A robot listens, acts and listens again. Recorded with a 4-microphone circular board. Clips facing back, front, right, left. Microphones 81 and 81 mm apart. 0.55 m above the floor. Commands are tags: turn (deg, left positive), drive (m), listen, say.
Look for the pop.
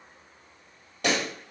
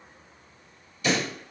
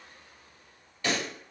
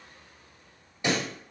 <turn deg="160"/>
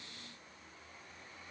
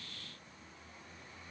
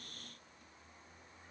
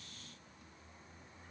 <say>I heard a pop from this way, but can't make it out now.</say>